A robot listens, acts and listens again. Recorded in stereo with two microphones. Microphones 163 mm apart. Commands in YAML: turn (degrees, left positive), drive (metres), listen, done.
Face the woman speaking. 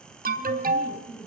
turn: 15
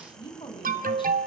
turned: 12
turn: 30
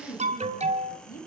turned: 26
turn: 115
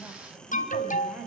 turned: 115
done: "Found it: a woman speaking, straight ahead."